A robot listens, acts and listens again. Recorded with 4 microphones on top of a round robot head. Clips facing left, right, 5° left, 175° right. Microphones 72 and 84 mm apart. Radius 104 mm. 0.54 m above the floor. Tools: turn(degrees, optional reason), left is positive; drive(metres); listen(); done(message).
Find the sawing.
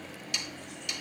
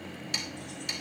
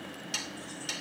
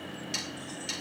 turn(degrees=-40, reason="The sawing: 40° right.")
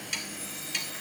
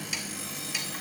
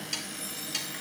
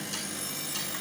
turn(degrees=-10, reason="The sawing is now 10° right.")
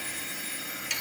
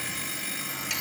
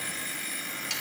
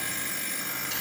listen()
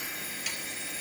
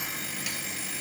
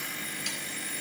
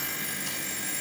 listen()
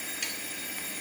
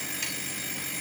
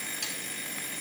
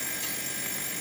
done("I heard sawing from this way, but can't make it out now.")